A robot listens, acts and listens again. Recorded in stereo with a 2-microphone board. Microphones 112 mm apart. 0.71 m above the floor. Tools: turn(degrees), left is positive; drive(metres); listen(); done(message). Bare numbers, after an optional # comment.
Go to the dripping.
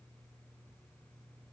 listen()
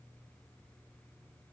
listen()
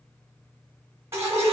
# The dripping: about 25° right or 155° right.
turn(-25)
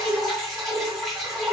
drive(1.0)
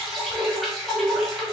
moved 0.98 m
drive(1.0)
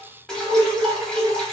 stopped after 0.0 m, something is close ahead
done("I am next to the dripping.")